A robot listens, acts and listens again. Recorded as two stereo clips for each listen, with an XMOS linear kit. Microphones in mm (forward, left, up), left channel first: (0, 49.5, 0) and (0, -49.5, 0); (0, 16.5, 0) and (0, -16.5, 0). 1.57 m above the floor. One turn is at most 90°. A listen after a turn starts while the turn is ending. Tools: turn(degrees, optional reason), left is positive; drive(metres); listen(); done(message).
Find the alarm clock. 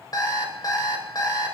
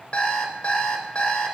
turn(degrees=45, reason="The alarm clock: about 45° left or 135° left.")
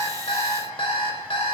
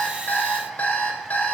turn(degrees=90, reason="So it is at 90° left.")
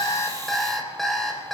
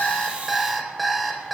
done("Found it: an alarm clock, straight ahead, 2 to 4 m away.")